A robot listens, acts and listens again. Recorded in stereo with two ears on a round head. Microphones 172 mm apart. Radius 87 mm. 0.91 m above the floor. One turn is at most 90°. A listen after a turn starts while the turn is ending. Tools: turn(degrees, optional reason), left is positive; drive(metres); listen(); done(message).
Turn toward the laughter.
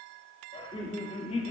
turn(degrees=35, reason="The laughter: about 35° left or 145° left.")
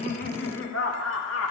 turn(degrees=90, reason="So it is at 105° left.")
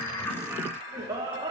turn(degrees=-20, reason="The laughter is now 20° right.")
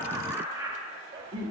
turn(degrees=-25, reason="The laughter is now 25° right.")
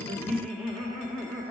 done("Facing the laughter.")